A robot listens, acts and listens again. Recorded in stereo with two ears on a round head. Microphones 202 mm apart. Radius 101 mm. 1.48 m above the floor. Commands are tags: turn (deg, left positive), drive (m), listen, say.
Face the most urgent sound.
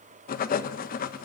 <listen/>
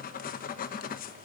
<listen/>
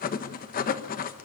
<say>I can't make out anything urgent to turn to.</say>